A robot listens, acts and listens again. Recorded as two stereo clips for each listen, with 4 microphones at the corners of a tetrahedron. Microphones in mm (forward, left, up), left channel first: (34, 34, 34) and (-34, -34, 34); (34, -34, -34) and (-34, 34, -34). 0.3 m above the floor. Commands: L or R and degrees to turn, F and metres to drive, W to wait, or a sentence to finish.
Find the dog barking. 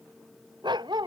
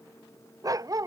R175
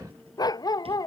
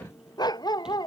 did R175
Facing the dog barking.